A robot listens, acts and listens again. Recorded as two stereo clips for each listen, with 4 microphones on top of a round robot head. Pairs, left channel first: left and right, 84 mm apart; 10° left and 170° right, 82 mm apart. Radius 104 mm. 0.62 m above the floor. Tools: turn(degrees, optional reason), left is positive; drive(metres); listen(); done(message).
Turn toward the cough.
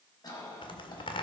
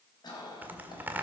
turn(degrees=50, reason="The cough: 50° left.")
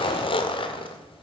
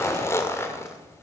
listen()
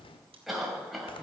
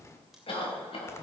done("Facing the cough.")